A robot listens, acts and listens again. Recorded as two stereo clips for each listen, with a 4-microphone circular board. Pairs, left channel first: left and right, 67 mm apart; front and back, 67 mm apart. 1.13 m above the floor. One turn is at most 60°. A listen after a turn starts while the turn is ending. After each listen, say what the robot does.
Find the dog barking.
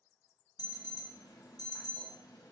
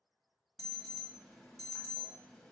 Keep listening.
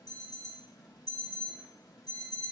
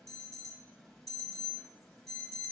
Keep listening.
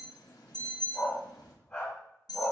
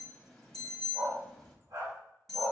Turn 60° left.
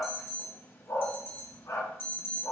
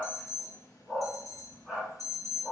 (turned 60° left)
Turn 60° left.
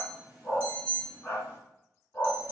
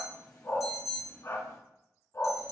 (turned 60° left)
Turn 30° left.
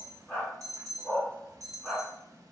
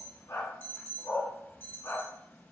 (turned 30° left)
Turn 10° left.
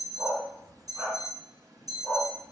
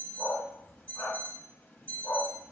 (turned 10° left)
Found it: a dog barking, straight ahead.